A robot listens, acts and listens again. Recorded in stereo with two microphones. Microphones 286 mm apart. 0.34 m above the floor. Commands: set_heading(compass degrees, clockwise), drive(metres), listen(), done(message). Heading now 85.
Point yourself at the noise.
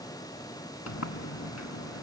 set_heading(15)
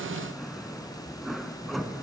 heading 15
done("Found it: a sliding door, straight ahead, 1 to 2 m away.")